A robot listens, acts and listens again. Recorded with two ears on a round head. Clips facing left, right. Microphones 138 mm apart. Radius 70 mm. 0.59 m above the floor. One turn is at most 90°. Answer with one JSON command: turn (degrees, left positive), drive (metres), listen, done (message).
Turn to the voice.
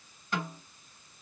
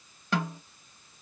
{"listen": true}
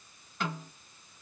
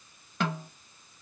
{"listen": true}
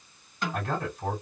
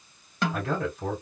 {"turn": -60}
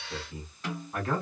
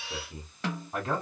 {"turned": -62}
{"turn": -25}
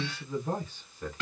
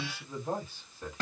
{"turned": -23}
{"done": "Found it: a man speaking, straight ahead."}